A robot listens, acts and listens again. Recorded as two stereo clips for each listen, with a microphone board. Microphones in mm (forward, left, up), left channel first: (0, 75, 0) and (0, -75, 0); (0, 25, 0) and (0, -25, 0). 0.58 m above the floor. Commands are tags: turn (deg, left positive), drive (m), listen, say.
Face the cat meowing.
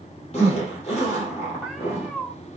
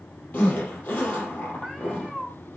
<turn deg="30"/>
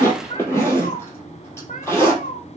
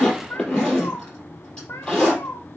<turn deg="105"/>
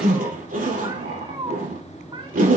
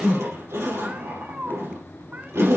<turn deg="-35"/>
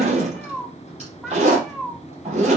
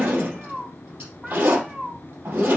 <say>Facing the cat meowing, 1 to 2 m away.</say>